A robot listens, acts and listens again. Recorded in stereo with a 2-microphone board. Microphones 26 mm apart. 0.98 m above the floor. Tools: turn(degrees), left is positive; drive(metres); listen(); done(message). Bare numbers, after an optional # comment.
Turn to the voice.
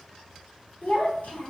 turn(90)
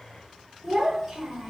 # So it is at 15° right.
turn(-15)
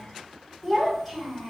done("Facing the child speaking, 1 to 2 m away.")